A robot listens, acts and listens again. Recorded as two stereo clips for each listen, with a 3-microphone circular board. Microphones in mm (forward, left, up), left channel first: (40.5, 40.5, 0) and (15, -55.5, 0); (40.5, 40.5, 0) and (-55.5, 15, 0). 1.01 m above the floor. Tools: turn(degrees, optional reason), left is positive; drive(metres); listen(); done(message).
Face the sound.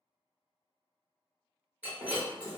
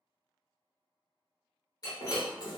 turn(degrees=-30, reason="The breaking glass: 30° right.")
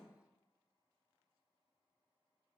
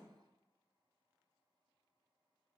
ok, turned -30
done("I heard breaking glass from this way, but can't make it out now.")